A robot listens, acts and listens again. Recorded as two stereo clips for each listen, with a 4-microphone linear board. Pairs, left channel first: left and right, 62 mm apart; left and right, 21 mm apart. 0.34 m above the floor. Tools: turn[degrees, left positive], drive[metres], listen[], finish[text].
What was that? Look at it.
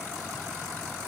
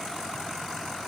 Action: listen[]
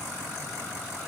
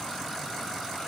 Action: listen[]
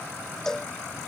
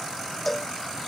Action: turn[30]
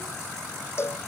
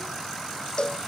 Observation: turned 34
Thought: So it is at 135° left.
Action: turn[135]
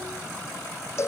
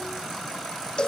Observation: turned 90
Thought: The cowbell is now 50° left.
Action: turn[50]
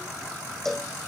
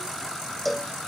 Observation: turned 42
Action: finish[Facing the cowbell.]